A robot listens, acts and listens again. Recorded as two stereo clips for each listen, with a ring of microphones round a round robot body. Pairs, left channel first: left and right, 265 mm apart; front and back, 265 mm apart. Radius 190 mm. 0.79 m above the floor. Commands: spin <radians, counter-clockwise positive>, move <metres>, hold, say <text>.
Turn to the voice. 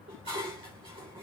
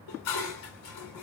hold
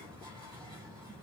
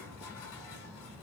hold
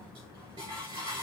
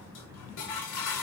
say I can't make out anyone speaking to turn to.